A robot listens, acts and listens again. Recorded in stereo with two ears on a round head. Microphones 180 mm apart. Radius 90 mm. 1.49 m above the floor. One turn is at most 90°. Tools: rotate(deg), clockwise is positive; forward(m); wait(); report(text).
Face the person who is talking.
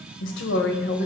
rotate(-50)
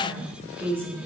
rotate(15)
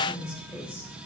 report("Found it: a woman speaking, straight ahead, 2 to 4 m away.")